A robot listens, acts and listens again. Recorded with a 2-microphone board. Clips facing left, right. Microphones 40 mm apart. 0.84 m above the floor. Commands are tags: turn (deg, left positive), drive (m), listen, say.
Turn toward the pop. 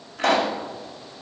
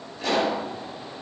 <turn deg="70"/>
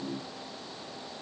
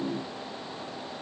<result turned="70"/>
<listen/>
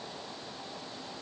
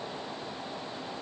<say>I heard a pop, but can't make it out now. It was about straight ahead or 40° left.</say>